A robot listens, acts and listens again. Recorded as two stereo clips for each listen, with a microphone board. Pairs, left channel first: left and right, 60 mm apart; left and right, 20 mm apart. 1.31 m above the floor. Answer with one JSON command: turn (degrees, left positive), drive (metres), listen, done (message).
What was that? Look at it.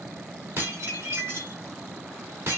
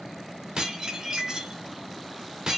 {"turn": -45}
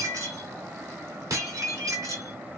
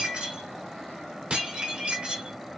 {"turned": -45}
{"turn": -85}
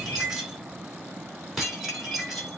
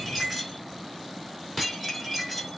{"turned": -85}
{"done": "Found it: dishes clattering, straight ahead, 2 to 4 m away."}